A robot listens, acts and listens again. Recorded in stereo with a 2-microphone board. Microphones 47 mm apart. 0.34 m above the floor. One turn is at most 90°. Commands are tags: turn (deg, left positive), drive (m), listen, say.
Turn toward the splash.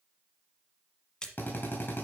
<turn deg="15"/>
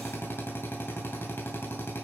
<listen/>
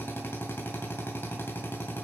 <say>I heard a splash, but can't make it out now. It was about straight ahead or 150° left.</say>